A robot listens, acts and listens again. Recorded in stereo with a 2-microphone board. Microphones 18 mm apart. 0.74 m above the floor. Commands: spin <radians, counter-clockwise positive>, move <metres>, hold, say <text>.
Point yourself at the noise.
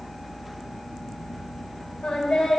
spin 1.22
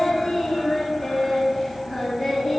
say Found it: singing, straight ahead.